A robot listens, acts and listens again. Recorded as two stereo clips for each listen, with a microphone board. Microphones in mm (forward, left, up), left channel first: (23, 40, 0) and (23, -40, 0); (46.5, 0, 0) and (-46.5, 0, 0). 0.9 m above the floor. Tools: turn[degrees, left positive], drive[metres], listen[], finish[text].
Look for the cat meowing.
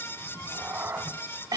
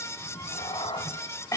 Thought: The cat meowing: 25° right.
Action: turn[-25]
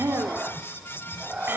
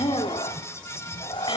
Thought: The cat meowing is now 10° right.
Action: turn[-10]
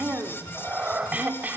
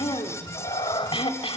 Thought: The cat meowing is now 20° right.
Action: turn[-20]
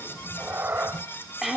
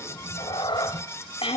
Thought: The cat meowing is now 30° right.
Action: turn[-30]
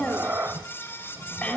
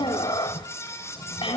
Thought: The cat meowing is now 25° right.
Action: turn[-25]
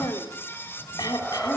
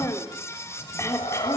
Thought: The cat meowing is now 10° left.
Action: turn[10]
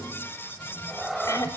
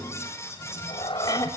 Action: finish[Facing the cat meowing, 1 to 2 m away.]